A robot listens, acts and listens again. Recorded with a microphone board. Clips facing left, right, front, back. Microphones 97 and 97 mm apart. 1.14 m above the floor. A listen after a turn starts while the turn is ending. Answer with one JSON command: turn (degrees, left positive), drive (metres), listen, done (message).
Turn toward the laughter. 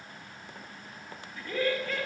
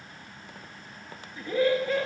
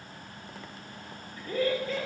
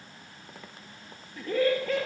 {"turn": -155}
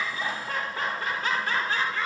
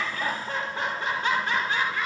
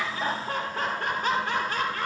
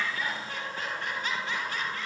{"turn": -15}
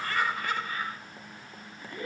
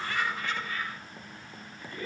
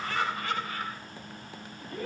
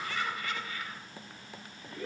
{"turn": 15}
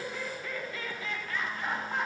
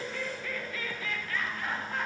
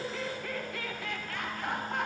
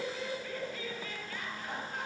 {"done": "Facing the laughter."}